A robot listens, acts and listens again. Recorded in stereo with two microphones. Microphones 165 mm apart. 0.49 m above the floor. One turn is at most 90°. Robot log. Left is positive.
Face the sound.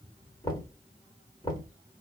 note: The knocking: about 25° left or 155° left.
cmd yaw +25
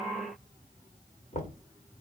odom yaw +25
note: So it is at 125° left.
cmd yaw +90
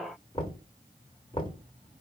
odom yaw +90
note: The knocking is now 30° left.
cmd yaw +30
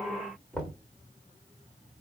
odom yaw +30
end: Found it: knocking, straight ahead, 1 to 2 m away.